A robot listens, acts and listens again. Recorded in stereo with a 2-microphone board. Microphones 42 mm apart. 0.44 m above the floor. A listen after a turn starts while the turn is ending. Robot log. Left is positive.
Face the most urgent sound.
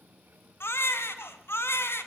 cmd yaw +90
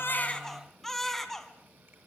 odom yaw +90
note: So it is at 10° left.
cmd yaw +10
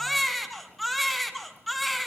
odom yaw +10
end: Facing the baby crying.